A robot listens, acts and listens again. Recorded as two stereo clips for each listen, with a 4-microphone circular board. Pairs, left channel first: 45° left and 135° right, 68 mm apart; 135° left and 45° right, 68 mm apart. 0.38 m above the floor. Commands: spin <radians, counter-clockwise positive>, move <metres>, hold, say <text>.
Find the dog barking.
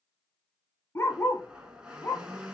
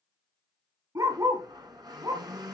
spin -0.26
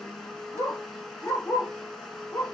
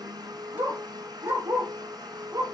spin -0.17
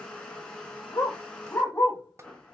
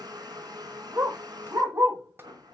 say Facing the dog barking, over 4 m away.